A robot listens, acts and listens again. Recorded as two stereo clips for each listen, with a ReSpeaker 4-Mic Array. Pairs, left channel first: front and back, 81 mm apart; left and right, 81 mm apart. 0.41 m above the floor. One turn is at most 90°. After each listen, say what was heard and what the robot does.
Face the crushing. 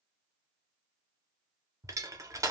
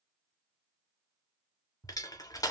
The crushing: 130° left. Turn 90° left.
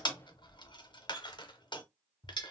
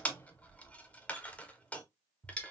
The crushing is now 15° left. Turn 15° left.
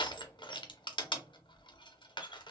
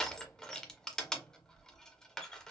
Found it: crushing, straight ahead, under 1 m away.